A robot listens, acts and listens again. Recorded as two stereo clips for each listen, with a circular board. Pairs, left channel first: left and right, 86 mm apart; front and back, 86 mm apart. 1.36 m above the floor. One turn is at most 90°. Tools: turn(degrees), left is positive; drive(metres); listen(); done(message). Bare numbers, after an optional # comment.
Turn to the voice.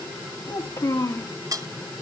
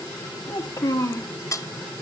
# The child speaking: 50° left.
turn(50)
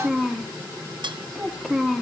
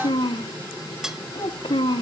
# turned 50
done("Found it: a child speaking, straight ahead, 1 to 2 m away.")